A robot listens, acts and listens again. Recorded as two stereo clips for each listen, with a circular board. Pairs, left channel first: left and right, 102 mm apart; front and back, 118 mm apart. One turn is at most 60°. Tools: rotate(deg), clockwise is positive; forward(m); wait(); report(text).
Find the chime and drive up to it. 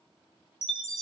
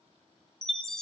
rotate(-60)
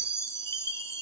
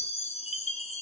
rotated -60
rotate(-25)
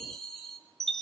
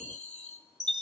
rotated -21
forward(1.0)
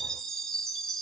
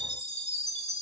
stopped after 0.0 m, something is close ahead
report("Blocked. The chime is further on, straight ahead.")